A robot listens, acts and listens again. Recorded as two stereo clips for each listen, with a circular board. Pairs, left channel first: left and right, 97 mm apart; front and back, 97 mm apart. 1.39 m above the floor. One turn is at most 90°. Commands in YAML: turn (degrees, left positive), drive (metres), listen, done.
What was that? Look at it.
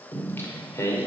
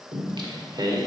turn: 90
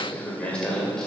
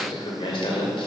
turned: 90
done: "Facing the singing, 2 to 4 m away."